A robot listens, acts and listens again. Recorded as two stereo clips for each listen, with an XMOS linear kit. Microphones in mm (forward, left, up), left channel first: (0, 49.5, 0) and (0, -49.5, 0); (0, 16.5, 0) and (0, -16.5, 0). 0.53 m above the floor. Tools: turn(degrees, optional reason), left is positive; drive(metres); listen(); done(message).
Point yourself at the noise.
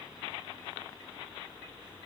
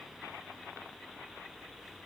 listen()
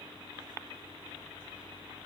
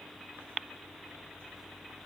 listen()
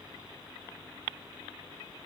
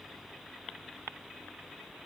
done("I can't make out anything.")